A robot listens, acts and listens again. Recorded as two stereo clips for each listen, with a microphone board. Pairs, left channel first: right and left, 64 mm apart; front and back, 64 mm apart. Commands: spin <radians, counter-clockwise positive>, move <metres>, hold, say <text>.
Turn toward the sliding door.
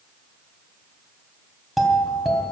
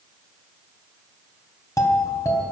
hold
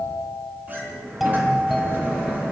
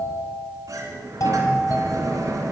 spin 2.62
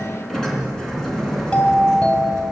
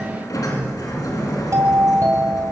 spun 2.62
spin -0.17
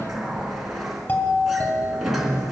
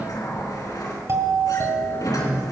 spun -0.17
say Facing the sliding door, 2 to 4 m away.